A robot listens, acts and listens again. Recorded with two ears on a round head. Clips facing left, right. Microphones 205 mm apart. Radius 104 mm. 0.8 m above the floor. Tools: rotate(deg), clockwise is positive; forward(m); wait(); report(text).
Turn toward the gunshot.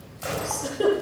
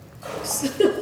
rotate(-35)
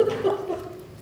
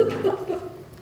wait()
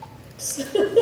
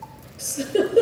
report("I heard a gunshot, but can't make it out now. It was about straight ahead or 110° left.")